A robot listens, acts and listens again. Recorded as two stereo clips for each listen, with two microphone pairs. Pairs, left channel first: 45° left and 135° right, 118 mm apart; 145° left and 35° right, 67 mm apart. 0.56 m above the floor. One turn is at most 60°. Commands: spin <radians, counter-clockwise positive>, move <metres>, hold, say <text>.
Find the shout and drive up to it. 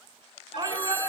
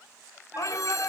spin 1.05
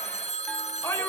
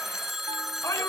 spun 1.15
spin 1.05
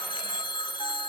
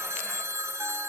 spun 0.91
spin 1.05
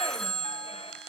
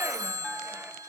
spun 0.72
spin 0.26
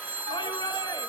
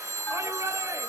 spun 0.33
move 1.0
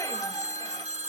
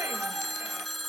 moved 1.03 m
move 1.0
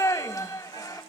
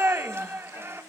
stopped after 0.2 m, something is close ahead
say I am next to the shout.